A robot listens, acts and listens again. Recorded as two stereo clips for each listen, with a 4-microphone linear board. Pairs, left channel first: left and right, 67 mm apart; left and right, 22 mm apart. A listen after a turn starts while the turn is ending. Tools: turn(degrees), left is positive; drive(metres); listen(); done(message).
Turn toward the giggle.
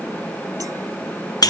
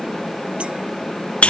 listen()
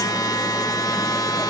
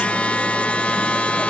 listen()
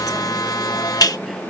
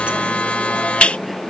done("I can't make out a giggle, only a buzzer.")